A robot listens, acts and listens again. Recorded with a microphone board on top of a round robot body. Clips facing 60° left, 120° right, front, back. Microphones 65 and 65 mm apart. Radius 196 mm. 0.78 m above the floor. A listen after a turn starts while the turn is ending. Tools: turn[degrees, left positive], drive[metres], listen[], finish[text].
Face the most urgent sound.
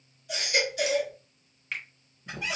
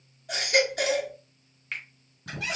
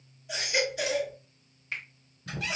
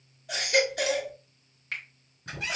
Thought: The baby crying: 155° right.
Action: turn[-155]
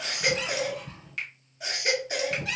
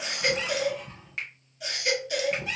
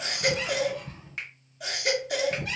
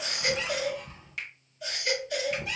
Action: finish[Facing the baby crying.]